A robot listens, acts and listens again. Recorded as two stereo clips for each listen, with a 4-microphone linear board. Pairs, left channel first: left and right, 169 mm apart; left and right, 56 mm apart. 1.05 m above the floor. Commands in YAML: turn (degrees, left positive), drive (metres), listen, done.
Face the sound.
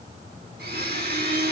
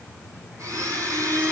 turn: -75
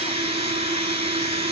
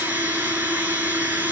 turn: -35
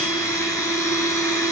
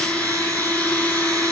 turn: 20
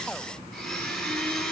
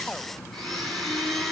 done: "Facing the blender, over 4 m away."